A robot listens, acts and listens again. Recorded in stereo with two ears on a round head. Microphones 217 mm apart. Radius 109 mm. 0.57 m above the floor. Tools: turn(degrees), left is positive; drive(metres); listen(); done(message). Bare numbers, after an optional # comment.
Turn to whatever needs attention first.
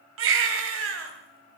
# The baby crying: about 60° right or 120° right.
turn(-60)
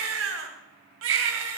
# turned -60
# So it is at 60° right.
turn(-60)
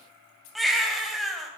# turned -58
done("Facing the baby crying.")